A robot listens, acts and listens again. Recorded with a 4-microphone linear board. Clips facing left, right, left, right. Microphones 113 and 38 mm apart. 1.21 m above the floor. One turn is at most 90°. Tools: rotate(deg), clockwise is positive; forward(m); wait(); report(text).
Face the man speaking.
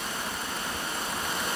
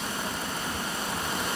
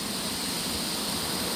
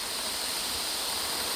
wait()
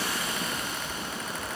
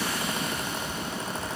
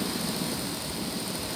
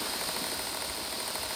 wait()
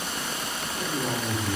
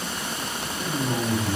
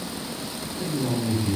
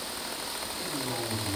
rotate(-35)
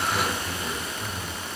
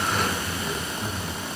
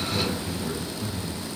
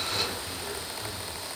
report("Found it: a man speaking, straight ahead.")